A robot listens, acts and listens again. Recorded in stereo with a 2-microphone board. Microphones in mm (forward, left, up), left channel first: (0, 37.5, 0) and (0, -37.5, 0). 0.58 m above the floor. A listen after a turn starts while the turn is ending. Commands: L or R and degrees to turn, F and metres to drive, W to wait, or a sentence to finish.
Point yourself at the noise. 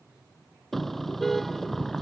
L30
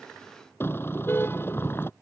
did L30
L150
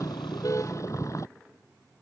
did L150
L45
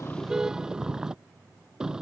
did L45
R10
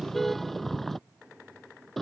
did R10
Found it: a car horn, straight ahead.